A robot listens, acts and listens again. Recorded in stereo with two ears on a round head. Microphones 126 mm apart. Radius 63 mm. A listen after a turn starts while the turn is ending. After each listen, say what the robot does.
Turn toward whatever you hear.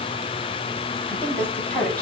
Turn 30° left.
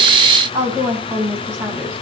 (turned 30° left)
Turn 20° right.
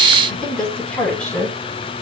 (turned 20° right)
Found it: a woman speaking, straight ahead.